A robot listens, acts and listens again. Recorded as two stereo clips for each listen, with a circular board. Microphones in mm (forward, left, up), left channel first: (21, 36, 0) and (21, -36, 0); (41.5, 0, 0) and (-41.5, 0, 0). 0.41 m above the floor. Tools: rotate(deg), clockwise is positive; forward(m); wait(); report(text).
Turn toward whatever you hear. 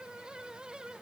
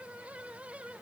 wait()
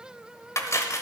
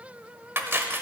rotate(-125)
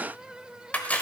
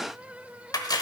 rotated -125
rotate(-25)
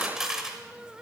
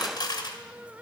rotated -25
rotate(10)
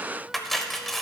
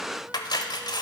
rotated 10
report("Found it: cutlery clinking, straight ahead.")